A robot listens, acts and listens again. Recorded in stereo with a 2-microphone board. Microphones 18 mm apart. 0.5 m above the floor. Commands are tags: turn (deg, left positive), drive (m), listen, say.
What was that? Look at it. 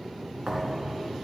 <turn deg="-65"/>
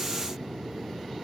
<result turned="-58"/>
<listen/>
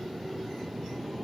<say>I heard a thud, but can't make it out now. It was about 5° right or 60° right.</say>